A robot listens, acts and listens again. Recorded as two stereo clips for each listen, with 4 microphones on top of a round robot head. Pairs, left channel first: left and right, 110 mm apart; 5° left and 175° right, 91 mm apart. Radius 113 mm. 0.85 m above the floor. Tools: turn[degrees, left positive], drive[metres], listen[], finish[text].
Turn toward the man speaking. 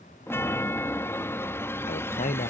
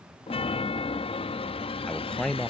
Thought: The man speaking: 85° left.
Action: turn[85]
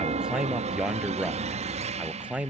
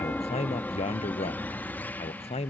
Thought: The man speaking is now 10° right.
Action: turn[-10]
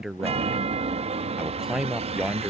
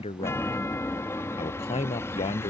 Action: finish[Facing the man speaking.]